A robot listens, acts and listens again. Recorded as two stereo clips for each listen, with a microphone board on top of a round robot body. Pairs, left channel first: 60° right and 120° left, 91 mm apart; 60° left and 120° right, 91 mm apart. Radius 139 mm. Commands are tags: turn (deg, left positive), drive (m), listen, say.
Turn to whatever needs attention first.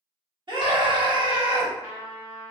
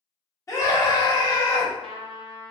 <turn deg="110"/>
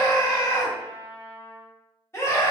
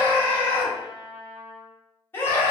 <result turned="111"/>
<say>Facing the scream, 1 to 2 m away.</say>